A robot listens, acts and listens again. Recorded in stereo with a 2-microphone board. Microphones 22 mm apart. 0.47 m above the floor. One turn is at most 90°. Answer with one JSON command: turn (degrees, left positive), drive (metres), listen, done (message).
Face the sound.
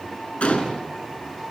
{"turn": 90}
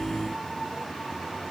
{"done": "I heard a gunshot from this way, but can't make it out now."}